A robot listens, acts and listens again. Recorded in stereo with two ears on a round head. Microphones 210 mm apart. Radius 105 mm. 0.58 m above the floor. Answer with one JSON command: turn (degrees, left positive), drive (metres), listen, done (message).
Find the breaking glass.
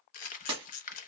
{"turn": -20}
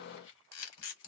{"listen": true}
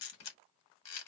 {"done": "I heard breaking glass, but can't make it out now. It was about straight ahead or 140° right."}